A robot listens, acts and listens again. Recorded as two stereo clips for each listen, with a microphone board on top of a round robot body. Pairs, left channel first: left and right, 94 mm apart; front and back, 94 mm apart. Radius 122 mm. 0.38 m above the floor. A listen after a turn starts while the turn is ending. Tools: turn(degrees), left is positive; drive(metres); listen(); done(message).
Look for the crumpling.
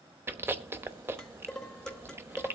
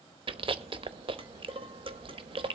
listen()
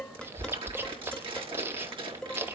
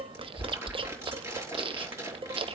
turn(degrees=-120)
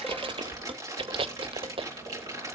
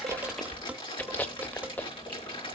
turn(degrees=-35)
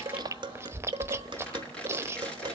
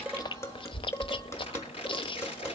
turn(degrees=10)
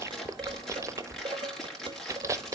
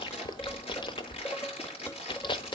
done("Found it: crumpling, straight ahead, over 4 m away.")